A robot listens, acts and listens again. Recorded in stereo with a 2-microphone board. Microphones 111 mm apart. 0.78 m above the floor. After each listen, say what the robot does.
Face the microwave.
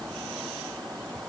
Keep listening.
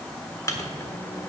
Turn 30° left.
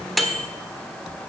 Found it: a microwave, straight ahead.